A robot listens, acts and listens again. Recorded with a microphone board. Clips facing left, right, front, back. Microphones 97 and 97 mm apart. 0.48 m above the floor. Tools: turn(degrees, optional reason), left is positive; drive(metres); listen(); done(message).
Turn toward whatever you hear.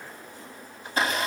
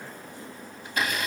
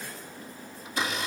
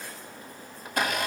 turn(degrees=145, reason="The blender: 145° left.")
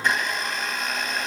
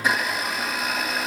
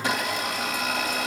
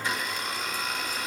done("Facing the blender, 2 to 4 m away.")